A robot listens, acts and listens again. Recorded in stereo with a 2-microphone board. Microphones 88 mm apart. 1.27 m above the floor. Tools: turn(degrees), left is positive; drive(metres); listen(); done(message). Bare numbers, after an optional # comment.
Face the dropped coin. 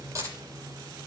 # The dropped coin: about 35° right or 145° right.
turn(-35)
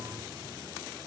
listen()
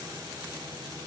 done("I heard a dropped coin, but can't make it out now. It was about straight ahead or 110° right.")